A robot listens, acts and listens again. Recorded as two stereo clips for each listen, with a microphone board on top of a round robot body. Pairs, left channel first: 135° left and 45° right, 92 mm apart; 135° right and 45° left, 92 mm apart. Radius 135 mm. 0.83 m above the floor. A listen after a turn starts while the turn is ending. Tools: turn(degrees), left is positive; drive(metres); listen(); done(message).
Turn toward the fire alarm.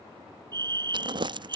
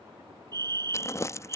done("Facing the fire alarm.")